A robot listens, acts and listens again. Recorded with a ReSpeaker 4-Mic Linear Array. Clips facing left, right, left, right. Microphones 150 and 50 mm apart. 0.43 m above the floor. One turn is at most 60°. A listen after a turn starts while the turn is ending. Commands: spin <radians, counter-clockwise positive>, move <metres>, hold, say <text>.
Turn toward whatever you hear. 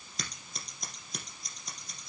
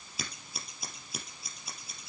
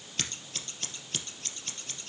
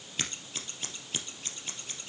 spin -0.52
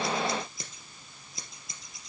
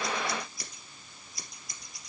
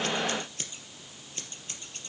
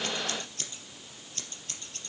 spin 0.44
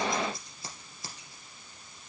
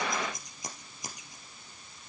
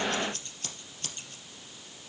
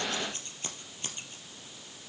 spin -0.26
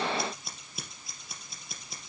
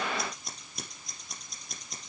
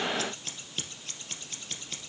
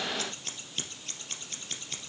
say Facing the scissors, 2 to 4 m away.